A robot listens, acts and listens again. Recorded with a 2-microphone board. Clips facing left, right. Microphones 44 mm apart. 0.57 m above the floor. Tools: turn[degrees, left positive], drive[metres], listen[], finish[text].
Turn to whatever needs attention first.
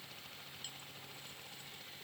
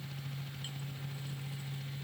Action: listen[]
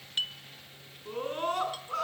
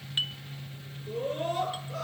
Thought: The scream: about 70° left or 110° left.
Action: turn[70]
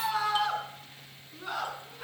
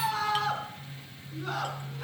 Action: finish[Facing the scream, over 4 m away.]